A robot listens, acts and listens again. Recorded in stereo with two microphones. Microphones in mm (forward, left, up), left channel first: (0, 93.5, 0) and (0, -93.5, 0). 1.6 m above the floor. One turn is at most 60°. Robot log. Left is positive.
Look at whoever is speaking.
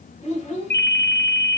note: The child speaking: about 35° left or 145° left.
cmd yaw +35
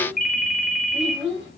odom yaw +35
end: Found it: a child speaking, straight ahead, over 4 m away.